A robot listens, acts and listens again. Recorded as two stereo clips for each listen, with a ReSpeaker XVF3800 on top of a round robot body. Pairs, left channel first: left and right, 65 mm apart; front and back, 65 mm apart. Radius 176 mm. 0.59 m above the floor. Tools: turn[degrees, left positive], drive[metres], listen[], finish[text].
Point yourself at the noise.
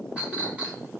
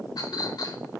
Thought: The clink: 15° right.
Action: turn[-15]
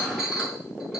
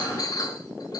Action: finish[Found it: a clink, straight ahead, over 4 m away.]